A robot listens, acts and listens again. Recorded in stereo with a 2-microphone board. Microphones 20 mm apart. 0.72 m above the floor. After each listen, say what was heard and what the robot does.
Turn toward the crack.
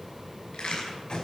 Turn 90° left.
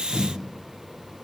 Facing where the crack came from. I can't hear it now.